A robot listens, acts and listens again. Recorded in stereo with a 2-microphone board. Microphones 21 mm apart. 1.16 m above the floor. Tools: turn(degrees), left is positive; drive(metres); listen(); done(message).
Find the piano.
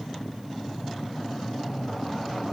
listen()
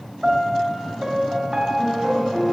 turn(degrees=-35)
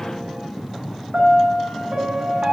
turn(degrees=-110)
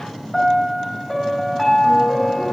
done("Facing the piano, 2 to 4 m away.")